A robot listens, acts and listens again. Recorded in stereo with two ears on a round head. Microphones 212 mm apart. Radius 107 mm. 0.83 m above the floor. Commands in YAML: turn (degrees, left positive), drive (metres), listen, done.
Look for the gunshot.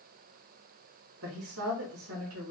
listen: true
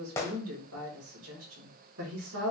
turn: 30
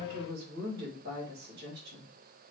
listen: true
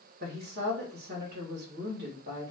done: "I heard a gunshot, but can't make it out now. It was about 20° right or 140° left."